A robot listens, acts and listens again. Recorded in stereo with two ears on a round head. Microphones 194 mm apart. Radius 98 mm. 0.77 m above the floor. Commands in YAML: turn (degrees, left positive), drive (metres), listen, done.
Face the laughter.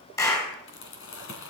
listen: true
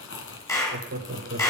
turn: -35
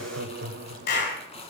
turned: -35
turn: -135
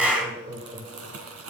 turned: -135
turn: -20
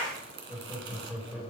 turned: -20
done: "Found it: laughter, straight ahead."